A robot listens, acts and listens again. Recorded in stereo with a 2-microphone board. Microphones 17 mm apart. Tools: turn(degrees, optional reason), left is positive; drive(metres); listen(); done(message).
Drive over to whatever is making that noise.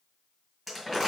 turn(degrees=30)
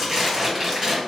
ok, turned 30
turn(degrees=-30, reason="So it is at 30° right.")
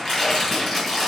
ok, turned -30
turn(degrees=15, reason="The crumpling is now 15° left.")
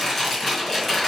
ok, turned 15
drive(metres=1.0)
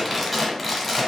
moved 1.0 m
turn(degrees=10, reason="The crumpling is now 10° left.")
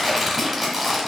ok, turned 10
drive(metres=1.0)
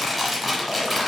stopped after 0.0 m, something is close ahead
done("I am next to the crumpling.")